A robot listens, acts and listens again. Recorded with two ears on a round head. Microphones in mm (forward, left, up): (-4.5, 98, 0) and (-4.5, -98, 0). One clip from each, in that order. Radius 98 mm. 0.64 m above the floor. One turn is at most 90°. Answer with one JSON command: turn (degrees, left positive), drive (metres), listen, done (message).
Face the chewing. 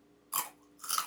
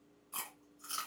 {"turn": 35}
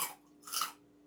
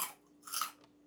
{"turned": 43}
{"done": "Facing the chewing, 1 to 2 m away."}